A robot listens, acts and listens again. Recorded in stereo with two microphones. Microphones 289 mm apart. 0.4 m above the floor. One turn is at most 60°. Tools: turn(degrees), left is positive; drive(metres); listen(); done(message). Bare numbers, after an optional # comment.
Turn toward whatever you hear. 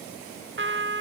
# The trumpet: about 45° right or 135° right.
turn(-45)
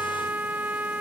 done("Facing the trumpet.")